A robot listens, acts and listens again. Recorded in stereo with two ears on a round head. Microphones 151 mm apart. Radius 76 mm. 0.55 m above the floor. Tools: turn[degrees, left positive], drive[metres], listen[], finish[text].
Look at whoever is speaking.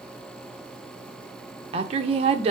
Thought: The woman speaking: about 35° right or 145° right.
Action: turn[-35]
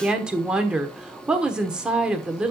Action: finish[Found it: a woman speaking, straight ahead, 1 to 2 m away.]